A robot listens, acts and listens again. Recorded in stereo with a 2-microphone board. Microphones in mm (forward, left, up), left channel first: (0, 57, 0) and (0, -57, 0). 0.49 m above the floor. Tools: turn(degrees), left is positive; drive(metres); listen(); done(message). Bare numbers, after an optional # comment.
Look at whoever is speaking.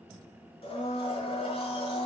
listen()
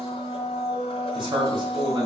# The man speaking: about 45° right or 135° right.
turn(-45)
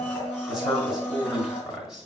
done("Found it: a man speaking, straight ahead, 1 to 2 m away.")